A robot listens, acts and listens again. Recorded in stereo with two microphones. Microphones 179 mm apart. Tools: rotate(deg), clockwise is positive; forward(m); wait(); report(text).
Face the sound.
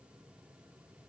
wait()
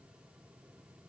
wait()
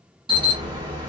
rotate(30)
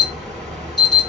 report("Facing the alarm.")